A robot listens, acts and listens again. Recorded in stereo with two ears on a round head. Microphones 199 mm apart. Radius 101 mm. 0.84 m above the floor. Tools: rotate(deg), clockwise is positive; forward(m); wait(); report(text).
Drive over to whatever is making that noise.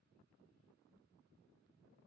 wait()
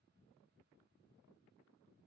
wait()
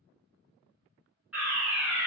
rotate(30)
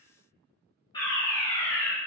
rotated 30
rotate(-20)
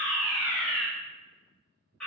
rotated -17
forward(1.0)
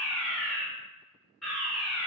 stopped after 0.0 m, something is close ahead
report("Something is in my way. I am facing the fire alarm but have not reached it.")